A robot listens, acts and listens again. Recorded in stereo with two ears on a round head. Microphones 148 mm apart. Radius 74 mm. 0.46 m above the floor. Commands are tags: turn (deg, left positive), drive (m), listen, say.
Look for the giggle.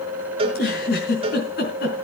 <turn deg="65"/>
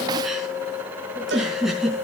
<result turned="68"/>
<say>Facing the giggle.</say>